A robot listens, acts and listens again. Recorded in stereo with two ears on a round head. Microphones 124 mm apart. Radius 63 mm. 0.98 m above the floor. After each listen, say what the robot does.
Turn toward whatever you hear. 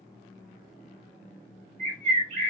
Turn 55° right.
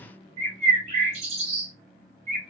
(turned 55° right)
Turn 55° right.
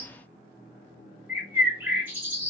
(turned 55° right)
Turn 15° right.
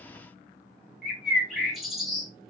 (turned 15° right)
Found it: a bird, straight ahead, 1 to 2 m away.